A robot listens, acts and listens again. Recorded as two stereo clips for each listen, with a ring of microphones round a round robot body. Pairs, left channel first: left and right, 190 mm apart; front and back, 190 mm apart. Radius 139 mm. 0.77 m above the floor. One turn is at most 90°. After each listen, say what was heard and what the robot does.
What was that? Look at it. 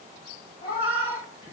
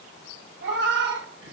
The cat meowing: 160° left. Turn 90° left.
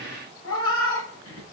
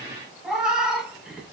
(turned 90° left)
The cat meowing is now 95° left. Turn 90° left.
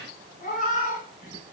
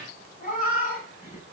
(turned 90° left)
The cat meowing is now 45° left. Turn 45° left.
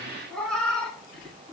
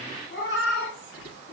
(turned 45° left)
Found it: a cat meowing, straight ahead, over 4 m away.